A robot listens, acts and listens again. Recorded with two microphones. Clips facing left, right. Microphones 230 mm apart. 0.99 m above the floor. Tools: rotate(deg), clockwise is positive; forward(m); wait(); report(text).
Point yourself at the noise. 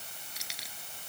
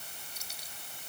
rotate(-90)
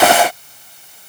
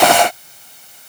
wait()
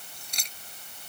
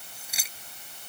report("Facing the keys jangling.")